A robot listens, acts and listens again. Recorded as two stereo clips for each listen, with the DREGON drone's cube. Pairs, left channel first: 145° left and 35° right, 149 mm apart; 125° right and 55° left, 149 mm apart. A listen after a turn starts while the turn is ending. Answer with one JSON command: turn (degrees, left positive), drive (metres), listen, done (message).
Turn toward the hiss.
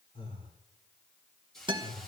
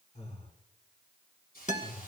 {"turn": -125}
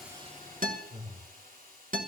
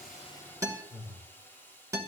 {"turn": -50}
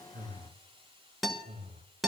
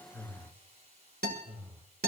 {"turn": 20}
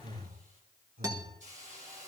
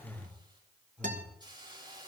{"done": "Found it: a hiss, straight ahead, over 4 m away."}